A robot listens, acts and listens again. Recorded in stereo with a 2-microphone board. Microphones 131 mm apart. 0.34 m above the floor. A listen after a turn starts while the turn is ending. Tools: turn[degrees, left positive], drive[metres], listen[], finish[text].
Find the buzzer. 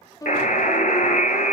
Action: turn[90]
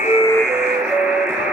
Thought: So it is at 10° right.
Action: turn[-10]
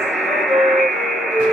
Action: finish[Facing the buzzer, under 1 m away.]